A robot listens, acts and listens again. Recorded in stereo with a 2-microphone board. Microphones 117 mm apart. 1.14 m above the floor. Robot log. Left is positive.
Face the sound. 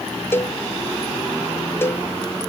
note: The cowbell: about 20° left or 160° left.
cmd yaw +20
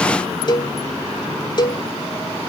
note: So it is at 140° left.
cmd yaw +140
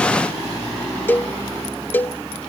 note: The cowbell is now 15° left.
cmd yaw +15
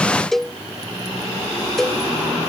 end: Found it: a cowbell, straight ahead.